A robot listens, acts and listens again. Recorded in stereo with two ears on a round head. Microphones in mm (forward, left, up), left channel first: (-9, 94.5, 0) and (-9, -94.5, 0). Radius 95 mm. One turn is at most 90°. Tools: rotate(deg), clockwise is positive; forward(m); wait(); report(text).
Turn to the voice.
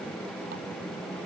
wait()
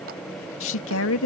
rotate(-70)
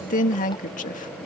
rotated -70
rotate(-35)
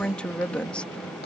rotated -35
report("Found it: a woman speaking, straight ahead.")